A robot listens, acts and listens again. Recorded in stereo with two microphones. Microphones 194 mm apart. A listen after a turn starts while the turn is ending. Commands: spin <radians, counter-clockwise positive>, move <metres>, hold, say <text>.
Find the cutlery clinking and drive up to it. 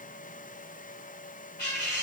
spin 0.52
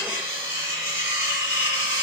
spin -0.26
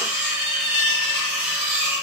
move 1.0
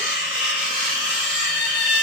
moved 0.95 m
move 1.0
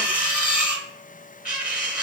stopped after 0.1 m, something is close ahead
say Arrived at the cutlery clinking, straight ahead.